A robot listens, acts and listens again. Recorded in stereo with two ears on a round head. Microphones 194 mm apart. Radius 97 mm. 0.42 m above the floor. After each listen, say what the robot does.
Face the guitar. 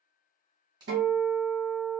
Turn 55° right.
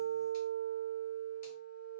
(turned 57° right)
Facing the guitar.